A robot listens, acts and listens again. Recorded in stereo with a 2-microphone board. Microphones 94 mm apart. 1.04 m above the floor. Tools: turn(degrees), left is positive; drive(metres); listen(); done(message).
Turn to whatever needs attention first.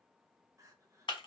turn(degrees=-35)
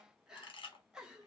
turn(degrees=-10)
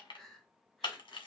done("Facing the crying, under 1 m away.")